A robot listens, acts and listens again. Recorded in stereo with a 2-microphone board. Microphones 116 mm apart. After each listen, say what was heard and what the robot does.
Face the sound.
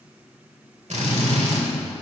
Turn 90° right.
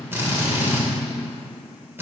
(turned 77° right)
So it is at 20° right. Turn 20° right.
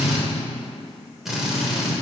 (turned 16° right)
Facing the drill, 1 to 2 m away.